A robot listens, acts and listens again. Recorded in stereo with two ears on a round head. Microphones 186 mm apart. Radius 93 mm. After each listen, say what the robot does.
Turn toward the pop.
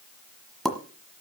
Turn 30° left.
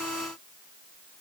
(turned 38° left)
Keep listening.
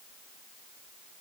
I heard a pop, but can't make it out now. It was about 35° right or 140° left.